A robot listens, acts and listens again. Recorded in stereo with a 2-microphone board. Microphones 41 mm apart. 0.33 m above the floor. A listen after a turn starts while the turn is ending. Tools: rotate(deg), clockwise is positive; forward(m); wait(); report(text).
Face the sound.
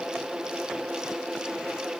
wait()
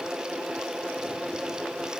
wait()
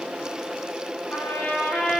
rotate(-45)
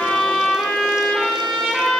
report("Found it: a trumpet, straight ahead.")